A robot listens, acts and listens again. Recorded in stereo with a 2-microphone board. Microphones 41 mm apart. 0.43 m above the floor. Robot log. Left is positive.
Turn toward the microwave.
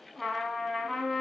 cmd idle
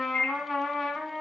note: The microwave: about 55° left or 125° left.
cmd yaw +55
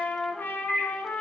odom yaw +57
note: So it is at 20° left.
cmd yaw +20
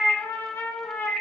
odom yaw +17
end: Facing the microwave.